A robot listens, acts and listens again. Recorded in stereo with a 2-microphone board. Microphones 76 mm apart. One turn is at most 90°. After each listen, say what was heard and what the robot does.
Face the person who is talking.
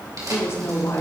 The woman speaking: about 40° left or 140° left. Turn 40° left.
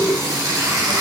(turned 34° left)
Keep listening.
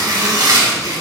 Keep listening.
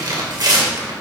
I heard a woman speaking, but can't make it out now. It was about 10° left or 105° left.